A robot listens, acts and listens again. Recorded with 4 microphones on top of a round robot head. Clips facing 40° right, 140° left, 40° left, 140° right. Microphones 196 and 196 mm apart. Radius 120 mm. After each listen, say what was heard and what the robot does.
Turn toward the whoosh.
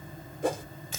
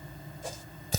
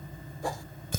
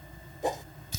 The whoosh: 70° right. Turn 70° right.
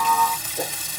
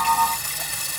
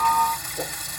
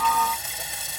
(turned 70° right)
Keep listening.
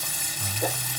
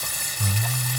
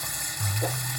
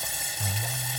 Keep listening.
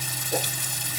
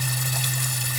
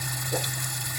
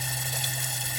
I heard a whoosh from this way, but can't make it out now.